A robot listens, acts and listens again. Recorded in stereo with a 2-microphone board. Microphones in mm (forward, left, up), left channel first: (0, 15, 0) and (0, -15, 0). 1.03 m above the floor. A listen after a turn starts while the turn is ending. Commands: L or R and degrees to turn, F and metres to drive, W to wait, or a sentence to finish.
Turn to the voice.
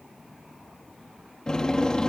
W
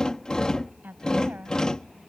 R70
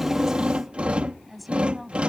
Facing the woman speaking.